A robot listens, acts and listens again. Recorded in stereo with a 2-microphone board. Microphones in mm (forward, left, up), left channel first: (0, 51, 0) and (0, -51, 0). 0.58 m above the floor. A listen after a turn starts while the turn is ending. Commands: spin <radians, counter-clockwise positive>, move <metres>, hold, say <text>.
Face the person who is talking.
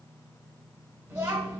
spin -0.52
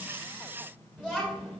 say Facing the child speaking, 1 to 2 m away.